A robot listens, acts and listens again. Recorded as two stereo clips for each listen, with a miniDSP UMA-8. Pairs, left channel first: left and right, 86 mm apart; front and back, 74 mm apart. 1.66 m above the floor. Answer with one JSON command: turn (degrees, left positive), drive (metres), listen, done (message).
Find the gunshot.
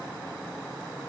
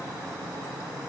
{"listen": true}
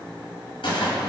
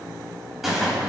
{"turn": 95}
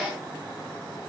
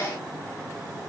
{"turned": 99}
{"done": "Facing where the gunshot came from. I can't hear it now."}